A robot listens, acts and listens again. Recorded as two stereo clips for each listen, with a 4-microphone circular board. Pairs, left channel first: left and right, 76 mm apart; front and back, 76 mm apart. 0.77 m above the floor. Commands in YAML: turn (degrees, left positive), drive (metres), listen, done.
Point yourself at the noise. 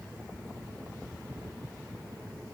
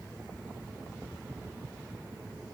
listen: true
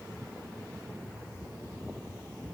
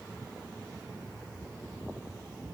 listen: true
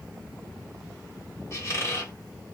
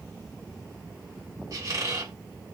turn: 140
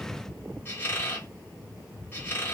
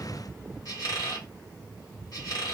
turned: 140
turn: 30
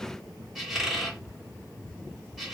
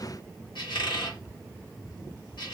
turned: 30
done: "Found it: a squeak, straight ahead, 1 to 2 m away."